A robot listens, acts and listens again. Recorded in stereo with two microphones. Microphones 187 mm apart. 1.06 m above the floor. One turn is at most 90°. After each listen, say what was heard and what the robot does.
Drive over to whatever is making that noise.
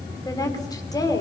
The woman speaking: about 20° left or 160° left. Turn 20° left.
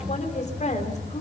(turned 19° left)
So it is at 140° left. Turn 90° left.
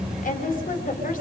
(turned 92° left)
The woman speaking is now 50° left. Turn 50° left.
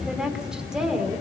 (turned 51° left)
Drive 1.0 m forward.
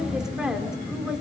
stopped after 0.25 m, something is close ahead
Blocked. The woman speaking is further on, straight ahead.